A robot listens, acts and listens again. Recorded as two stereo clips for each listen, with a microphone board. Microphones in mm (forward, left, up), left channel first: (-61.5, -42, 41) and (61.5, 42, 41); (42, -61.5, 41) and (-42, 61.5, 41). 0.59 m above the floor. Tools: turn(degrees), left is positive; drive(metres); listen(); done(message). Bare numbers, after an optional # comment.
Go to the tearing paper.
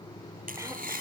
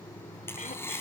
# The tearing paper: 20° left.
turn(20)
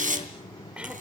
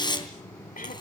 drive(1.0)
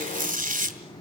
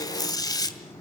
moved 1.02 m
# The tearing paper is now 10° left.
turn(10)
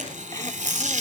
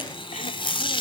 drive(1.0)
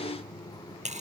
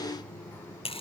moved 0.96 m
drive(1.0)
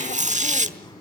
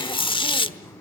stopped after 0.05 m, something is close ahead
done("Arrived at the tearing paper, straight ahead.")